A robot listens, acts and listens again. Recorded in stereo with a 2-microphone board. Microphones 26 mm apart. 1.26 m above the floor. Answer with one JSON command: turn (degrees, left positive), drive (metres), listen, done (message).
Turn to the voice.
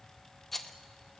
{"listen": true}
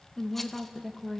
{"turn": -30}
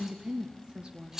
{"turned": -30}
{"turn": -130}
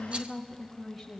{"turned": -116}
{"done": "Facing the woman speaking."}